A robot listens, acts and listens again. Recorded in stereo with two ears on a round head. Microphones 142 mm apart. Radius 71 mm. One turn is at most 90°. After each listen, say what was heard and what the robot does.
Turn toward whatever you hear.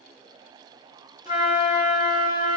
The flute: about 45° left or 135° left. Turn 45° left.
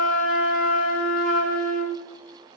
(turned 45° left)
So it is at 90° left. Turn 90° left.
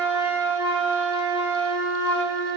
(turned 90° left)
The flute is now 15° right. Turn 15° right.
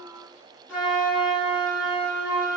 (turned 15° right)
Facing the flute.